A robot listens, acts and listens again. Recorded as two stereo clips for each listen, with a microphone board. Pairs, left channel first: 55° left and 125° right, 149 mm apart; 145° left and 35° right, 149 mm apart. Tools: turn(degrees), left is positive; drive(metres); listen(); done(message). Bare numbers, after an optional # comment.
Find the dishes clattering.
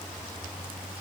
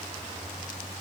listen()
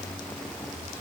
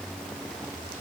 listen()
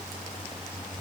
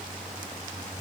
done("I can't make out dishes clattering to turn to.")